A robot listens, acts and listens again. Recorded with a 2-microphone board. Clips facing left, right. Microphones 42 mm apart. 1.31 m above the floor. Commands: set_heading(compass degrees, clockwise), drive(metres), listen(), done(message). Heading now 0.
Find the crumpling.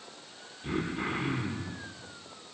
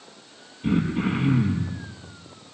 listen()
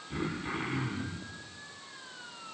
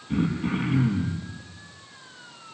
listen()
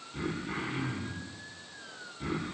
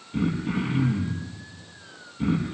done("I can't make out crumpling to turn to.")